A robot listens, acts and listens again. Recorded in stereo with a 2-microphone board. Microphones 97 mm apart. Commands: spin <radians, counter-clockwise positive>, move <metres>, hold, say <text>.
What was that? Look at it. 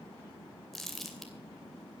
spin 0.52
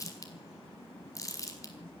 spin 2.53
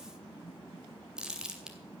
spin -0.17
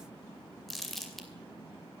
say Found it: crumpling, straight ahead, 2 to 4 m away.